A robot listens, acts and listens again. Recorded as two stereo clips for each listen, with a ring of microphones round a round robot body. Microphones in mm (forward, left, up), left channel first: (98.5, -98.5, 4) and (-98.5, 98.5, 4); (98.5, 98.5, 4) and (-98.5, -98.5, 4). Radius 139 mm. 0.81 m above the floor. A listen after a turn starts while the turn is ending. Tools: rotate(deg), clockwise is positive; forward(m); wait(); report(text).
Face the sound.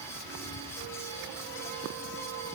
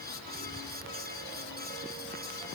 wait()
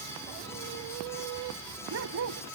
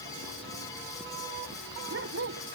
rotate(-180)
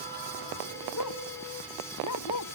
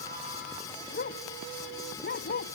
rotate(10)
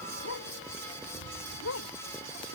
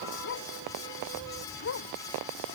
report("Facing the dog barking.")